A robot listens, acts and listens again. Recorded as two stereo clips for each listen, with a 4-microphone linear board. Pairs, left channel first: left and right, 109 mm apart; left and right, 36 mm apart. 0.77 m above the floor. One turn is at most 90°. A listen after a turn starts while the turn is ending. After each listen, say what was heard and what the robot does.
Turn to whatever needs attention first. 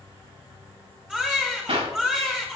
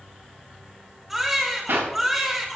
Turn 30° right.
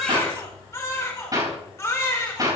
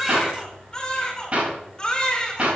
So it is at 25° left. Turn 25° left.
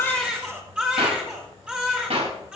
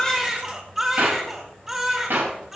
The baby crying is now 10° right. Turn 10° right.
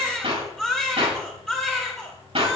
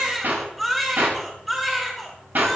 Facing the baby crying.